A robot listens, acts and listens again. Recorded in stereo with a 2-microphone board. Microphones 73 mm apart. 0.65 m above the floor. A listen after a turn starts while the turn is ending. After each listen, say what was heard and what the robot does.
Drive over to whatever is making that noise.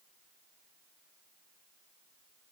Keep listening.
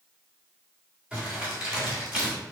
Turn 30° right.
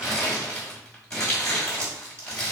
So it is at 15° left. Turn 15° left.
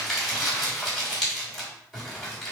Drive 1.0 m forward.
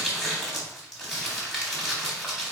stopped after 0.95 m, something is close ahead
I am next to the crumpling.